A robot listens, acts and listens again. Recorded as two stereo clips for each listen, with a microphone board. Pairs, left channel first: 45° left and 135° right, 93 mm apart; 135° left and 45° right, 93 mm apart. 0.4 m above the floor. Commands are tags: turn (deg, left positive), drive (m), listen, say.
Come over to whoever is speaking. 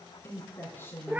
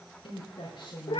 <turn deg="110"/>
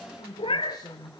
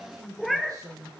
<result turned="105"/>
<drive m="1.0"/>
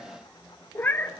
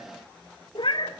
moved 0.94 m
<listen/>
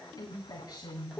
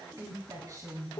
<drive m="1.0"/>
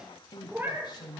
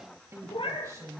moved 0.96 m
<turn deg="10"/>
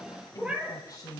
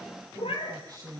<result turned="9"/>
<drive m="1.0"/>
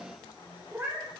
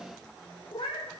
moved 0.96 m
<listen/>
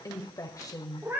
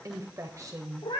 <drive m="1.0"/>
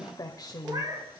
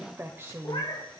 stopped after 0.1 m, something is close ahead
<turn deg="15"/>
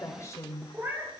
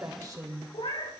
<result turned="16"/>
<say>Arrived at the woman speaking, straight ahead.</say>